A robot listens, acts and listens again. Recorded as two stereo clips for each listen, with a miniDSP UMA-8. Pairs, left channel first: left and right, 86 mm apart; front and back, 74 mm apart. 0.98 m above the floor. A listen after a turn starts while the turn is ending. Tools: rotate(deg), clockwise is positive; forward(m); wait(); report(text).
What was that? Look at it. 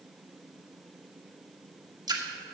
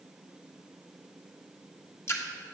rotate(55)
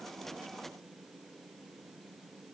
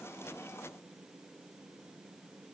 report("Facing where the splash came from. I can't hear it now.")